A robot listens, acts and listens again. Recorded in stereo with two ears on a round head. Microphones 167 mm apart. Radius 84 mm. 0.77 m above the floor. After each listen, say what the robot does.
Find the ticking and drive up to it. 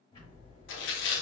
Turn 25° left.
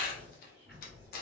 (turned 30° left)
Drive 1.0 m forward.
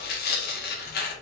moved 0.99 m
Keep listening.
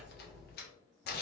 Drive 1.0 m forward.
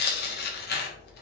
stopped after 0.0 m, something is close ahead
I am next to the ticking.